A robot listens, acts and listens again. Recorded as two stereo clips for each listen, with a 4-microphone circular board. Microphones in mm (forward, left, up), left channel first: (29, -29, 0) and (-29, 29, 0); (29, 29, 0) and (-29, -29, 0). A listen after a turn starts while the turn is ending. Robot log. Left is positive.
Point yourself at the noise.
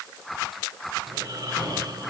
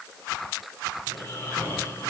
note: The snoring: 105° left.
cmd yaw +105
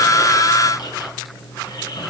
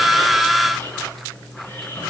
note: The snoring is now 15° right.
cmd yaw -15
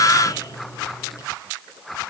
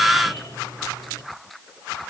end: Facing the snoring, 2 to 4 m away.